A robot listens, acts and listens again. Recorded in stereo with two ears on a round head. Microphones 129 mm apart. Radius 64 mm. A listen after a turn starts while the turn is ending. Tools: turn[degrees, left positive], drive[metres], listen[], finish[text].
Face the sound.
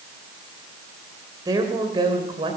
Thought: The woman speaking: about 30° right or 150° right.
Action: turn[-30]
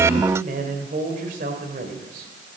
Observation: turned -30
Thought: So it is at 115° right.
Action: turn[-115]
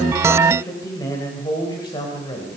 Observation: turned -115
Thought: The woman speaking is now 30° left.
Action: turn[30]
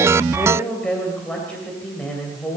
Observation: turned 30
Action: finish[Facing the woman speaking, 2 to 4 m away.]